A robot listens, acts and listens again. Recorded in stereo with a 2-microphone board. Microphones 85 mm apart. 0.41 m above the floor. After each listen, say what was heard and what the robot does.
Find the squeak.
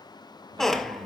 Turn 30° left.
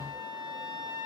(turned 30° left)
Keep listening.
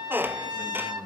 So it is at 25° right. Turn 25° right.
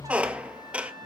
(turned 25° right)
The squeak is now 15° right. Turn 15° right.
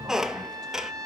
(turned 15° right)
Found it: a squeak, straight ahead.